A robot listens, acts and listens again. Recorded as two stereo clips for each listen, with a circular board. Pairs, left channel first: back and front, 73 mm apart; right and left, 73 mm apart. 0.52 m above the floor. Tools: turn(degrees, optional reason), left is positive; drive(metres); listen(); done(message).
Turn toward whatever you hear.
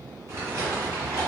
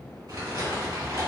turn(degrees=55, reason="The crumpling: 55° left.")
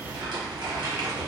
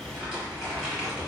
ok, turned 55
done("Facing the crumpling, 1 to 2 m away.")